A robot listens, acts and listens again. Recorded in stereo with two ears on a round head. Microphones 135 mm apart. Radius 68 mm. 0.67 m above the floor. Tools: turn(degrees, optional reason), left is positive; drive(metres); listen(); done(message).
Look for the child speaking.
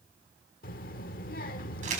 turn(degrees=60, reason="The child speaking: about 60° left or 120° left.")
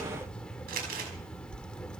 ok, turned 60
done("Found it: a child speaking, straight ahead.")